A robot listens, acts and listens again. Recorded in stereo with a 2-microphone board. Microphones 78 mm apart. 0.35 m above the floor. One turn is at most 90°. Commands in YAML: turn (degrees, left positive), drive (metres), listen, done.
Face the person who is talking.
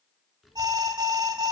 turn: 30
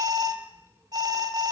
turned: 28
turn: -40
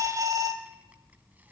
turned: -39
turn: -25
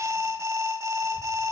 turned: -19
listen: true
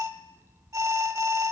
turn: -35
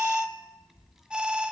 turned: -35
done: "Found it: a child speaking, straight ahead."